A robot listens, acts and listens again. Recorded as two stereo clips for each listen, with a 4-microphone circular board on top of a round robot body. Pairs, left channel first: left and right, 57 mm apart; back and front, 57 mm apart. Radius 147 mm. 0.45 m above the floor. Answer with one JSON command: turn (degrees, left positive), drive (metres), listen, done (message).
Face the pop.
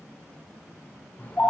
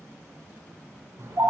{"listen": true}
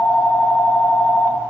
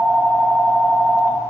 {"listen": true}
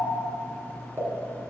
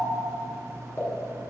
{"turn": -135}
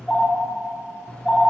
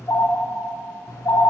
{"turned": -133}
{"done": "I heard a pop from this way, but can't make it out now."}